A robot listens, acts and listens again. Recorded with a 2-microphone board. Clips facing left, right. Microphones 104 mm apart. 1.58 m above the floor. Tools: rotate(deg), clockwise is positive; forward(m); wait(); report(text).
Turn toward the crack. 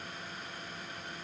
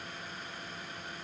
wait()
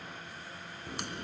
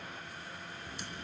rotate(-90)
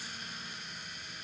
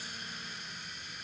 report("I heard a crack from this way, but can't make it out now.")